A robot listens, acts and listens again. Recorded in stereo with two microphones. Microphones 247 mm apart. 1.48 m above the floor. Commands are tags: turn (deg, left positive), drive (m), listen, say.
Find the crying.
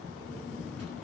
<listen/>
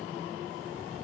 <listen/>
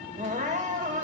<turn deg="-30"/>
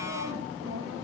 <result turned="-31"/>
<listen/>
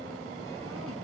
<listen/>
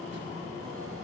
<say>I heard crying, but can't make it out now. It was about straight ahead or 120° right.</say>